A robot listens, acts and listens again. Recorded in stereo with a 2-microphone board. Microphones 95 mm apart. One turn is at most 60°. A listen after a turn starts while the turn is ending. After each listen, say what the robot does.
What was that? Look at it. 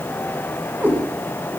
Turn 15° right.
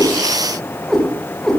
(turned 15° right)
Turn 30° left.
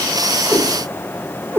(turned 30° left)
Turn 25° right.
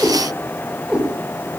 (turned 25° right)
Turn 10° right.
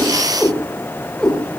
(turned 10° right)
Found it: a cat meowing, straight ahead.